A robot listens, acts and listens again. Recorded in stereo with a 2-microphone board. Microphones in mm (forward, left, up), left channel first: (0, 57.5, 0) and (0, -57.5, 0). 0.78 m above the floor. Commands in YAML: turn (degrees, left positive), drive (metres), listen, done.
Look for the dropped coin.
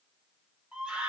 listen: true
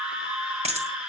turn: -65
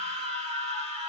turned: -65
listen: true
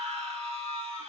done: "I heard a dropped coin, but can't make it out now. It was about straight ahead or 50° right."